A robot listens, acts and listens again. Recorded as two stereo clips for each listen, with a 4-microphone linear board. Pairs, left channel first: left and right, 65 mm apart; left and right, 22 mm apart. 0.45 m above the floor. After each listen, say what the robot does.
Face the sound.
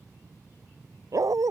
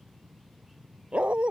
Turn 60° right.
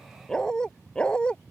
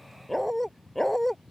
Turn 15° left.
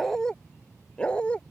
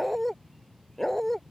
Turn 20° left.
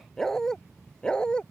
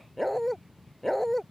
Turn 15° left.
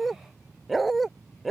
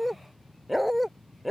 Found it: a dog barking, straight ahead.